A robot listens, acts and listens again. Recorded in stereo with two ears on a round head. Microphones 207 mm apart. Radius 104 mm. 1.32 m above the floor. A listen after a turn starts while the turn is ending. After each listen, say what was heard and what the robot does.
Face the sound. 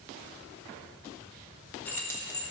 The keys jangling: about 15° left or 165° left. Turn 15° left.
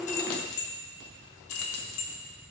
So it is at 105° left. Turn 105° left.
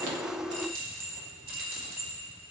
The keys jangling is now 40° right. Turn 40° right.
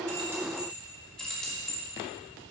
Found it: keys jangling, straight ahead.